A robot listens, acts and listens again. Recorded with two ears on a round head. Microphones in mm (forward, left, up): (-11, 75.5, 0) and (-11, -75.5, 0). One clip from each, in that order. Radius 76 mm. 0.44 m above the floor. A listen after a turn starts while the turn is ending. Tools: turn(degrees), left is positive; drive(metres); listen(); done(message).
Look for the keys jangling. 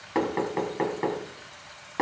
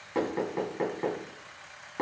listen()
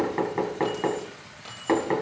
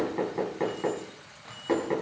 turn(degrees=65)
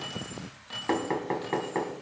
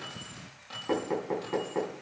done("Found it: keys jangling, straight ahead, over 4 m away.")